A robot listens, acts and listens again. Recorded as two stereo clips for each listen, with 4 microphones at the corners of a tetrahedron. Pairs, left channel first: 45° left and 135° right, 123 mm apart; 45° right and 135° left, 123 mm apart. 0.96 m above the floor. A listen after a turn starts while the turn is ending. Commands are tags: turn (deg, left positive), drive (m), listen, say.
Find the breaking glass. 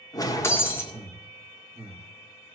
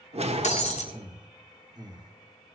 <turn deg="-25"/>
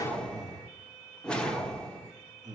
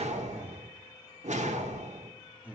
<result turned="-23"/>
<say>I heard breaking glass from this way, but can't make it out now.</say>